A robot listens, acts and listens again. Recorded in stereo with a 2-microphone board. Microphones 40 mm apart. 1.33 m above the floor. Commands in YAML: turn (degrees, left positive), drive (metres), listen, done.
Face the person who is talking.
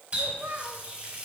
turn: -75
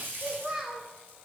turn: -20
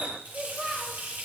done: "Facing the child speaking."